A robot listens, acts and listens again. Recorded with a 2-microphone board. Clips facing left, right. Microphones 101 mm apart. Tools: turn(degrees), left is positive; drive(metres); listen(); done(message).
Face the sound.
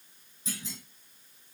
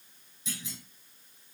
turn(degrees=40)
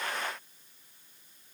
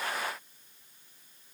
listen()
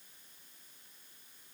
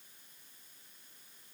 done("I heard a clunk, but can't make it out now. It was about straight ahead or 100° left.")